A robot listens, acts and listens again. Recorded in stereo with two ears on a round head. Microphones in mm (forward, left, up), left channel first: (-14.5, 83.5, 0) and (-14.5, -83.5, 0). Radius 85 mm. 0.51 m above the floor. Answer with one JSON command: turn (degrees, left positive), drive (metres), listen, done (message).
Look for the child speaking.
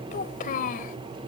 {"turn": 45}
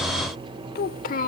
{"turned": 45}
{"turn": 40}
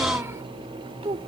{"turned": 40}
{"turn": -30}
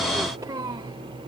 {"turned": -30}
{"turn": -20}
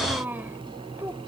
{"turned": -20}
{"turn": -10}
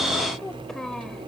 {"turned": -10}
{"done": "Found it: a child speaking, straight ahead."}